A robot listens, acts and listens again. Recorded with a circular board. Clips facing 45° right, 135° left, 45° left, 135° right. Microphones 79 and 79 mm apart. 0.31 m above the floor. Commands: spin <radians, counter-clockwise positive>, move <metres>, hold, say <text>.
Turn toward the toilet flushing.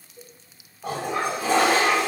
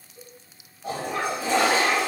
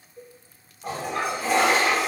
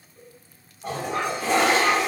spin -0.70
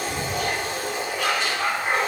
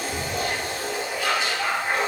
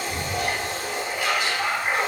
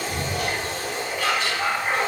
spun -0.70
spin -0.61
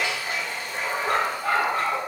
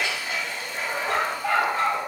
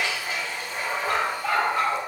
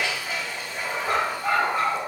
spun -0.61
say Facing the toilet flushing, under 1 m away.